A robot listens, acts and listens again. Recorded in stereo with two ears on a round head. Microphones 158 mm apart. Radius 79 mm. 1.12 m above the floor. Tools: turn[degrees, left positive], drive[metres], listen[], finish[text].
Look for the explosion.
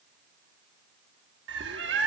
Action: listen[]
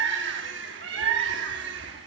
Action: listen[]
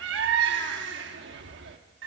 Action: finish[I can't make out an explosion to turn to.]